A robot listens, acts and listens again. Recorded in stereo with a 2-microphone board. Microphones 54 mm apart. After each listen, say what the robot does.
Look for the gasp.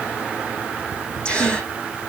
Turn 20° left.
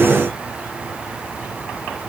Keep listening.
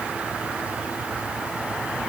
I heard a gasp, but can't make it out now. It was about straight ahead or 140° left.